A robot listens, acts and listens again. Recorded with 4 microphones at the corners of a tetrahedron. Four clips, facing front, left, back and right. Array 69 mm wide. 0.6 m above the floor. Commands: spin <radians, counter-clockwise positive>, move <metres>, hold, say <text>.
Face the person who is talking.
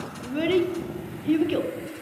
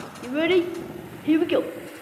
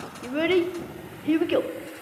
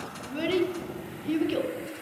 spin 2.18
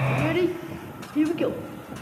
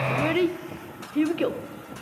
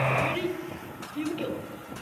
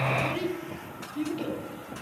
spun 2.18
spin 1.05
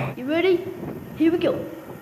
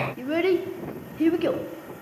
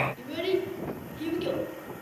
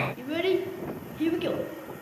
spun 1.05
spin 0.35
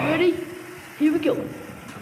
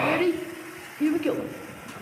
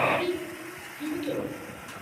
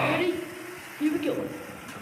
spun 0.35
spin 0.17
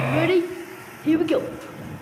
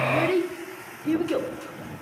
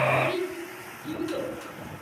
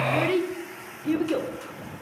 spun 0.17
say Facing the child speaking.